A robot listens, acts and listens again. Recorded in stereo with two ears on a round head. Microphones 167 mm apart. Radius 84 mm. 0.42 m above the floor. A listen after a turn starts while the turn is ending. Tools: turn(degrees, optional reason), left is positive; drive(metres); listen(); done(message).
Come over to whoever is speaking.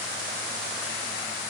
listen()
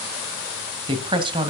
turn(degrees=-25, reason="The woman speaking: about 25° right or 155° right.")
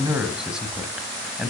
drive(metres=1.0)
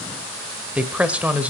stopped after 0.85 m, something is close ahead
turn(degrees=-10, reason="The woman speaking is now 10° right.")
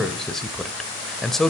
done("Arrived at the woman speaking, straight ahead.")